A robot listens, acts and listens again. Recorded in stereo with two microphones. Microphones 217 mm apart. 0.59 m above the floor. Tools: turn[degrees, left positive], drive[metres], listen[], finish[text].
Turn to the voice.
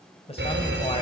Thought: The man speaking: about 25° left or 155° left.
Action: turn[25]
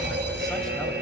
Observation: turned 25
Action: listen[]
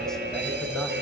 Action: listen[]
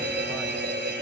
Action: finish[I heard a man speaking, but can't make it out now. It was about straight ahead or 130° left.]